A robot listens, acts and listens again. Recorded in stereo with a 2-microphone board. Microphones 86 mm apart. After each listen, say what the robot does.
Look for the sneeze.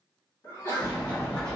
Turn 40° left.
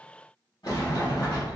Keep listening.
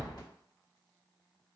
I heard a sneeze, but can't make it out now. It was about straight ahead or 100° left.